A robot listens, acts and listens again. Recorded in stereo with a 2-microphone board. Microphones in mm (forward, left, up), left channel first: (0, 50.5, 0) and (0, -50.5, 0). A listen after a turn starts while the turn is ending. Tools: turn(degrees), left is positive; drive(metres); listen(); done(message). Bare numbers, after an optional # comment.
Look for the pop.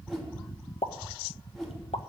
# The pop: about 75° left or 105° left.
turn(75)
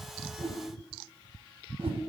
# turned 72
listen()
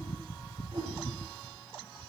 done("I heard a pop, but can't make it out now. It was about straight ahead or 35° left.")